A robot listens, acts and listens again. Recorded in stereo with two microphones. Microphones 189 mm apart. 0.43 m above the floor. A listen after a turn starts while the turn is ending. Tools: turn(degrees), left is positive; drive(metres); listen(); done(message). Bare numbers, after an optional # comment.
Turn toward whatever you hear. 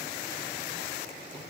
listen()
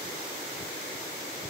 listen()
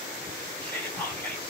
turn(30)
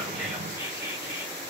# So it is at 20° right.
turn(-20)
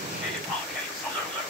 done("Facing the whispering.")